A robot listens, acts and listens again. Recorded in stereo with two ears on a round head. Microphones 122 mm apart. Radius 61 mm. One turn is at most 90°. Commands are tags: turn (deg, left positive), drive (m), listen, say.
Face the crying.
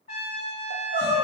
<turn deg="-90"/>
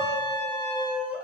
<turn deg="-10"/>
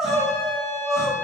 <say>Facing the crying, under 1 m away.</say>